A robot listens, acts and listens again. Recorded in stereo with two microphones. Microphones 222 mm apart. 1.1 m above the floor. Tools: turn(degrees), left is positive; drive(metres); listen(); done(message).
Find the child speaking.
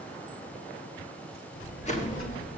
turn(degrees=75)
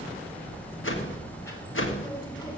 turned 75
turn(degrees=20)
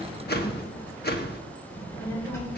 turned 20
turn(degrees=10)
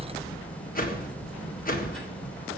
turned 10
done("Facing the child speaking, 2 to 4 m away.")